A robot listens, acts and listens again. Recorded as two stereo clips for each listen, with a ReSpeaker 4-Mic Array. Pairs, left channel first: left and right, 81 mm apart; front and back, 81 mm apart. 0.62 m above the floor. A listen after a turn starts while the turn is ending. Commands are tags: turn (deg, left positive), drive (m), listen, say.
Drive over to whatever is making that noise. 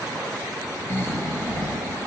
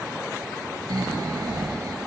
<turn deg="150"/>
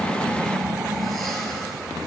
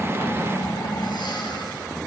<drive m="1.0"/>
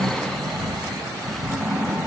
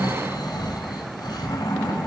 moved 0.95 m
<drive m="1.0"/>
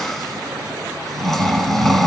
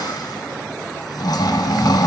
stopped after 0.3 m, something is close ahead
<say>I am next to the snoring.</say>